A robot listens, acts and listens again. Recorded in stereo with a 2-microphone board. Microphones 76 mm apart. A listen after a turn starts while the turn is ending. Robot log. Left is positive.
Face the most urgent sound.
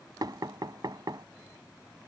cmd idle
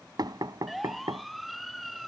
cmd yaw +30
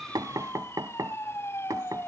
note: So it is at 145° left.
cmd yaw +145
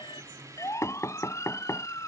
note: The siren is now 40° left.
cmd yaw +40
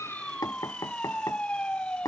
note: The siren is now 15° left.
cmd yaw +15
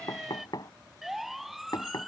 end: Facing the siren.